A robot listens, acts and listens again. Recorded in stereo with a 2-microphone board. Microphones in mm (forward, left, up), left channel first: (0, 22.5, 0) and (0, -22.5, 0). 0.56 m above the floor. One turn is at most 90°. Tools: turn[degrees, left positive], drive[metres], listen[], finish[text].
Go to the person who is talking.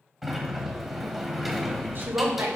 Thought: The woman speaking: about 55° right or 125° right.
Action: turn[-55]
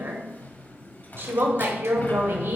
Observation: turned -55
Thought: So it is at 65° right.
Action: turn[-65]
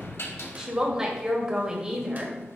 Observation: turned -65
Thought: The woman speaking is now 15° right.
Action: turn[-15]
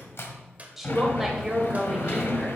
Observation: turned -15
Action: drive[1.0]
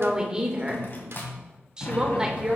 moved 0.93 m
Thought: The woman speaking is now 20° right.
Action: turn[-20]
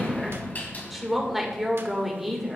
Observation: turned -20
Action: drive[1.0]
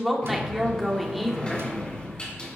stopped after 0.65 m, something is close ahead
Action: finish[I am next to the woman speaking.]